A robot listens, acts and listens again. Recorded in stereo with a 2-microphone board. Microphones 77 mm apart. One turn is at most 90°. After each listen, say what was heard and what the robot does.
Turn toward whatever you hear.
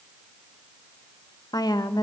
The woman speaking: about 55° left or 125° left. Turn 55° left.
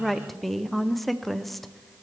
Found it: a woman speaking, straight ahead, under 1 m away.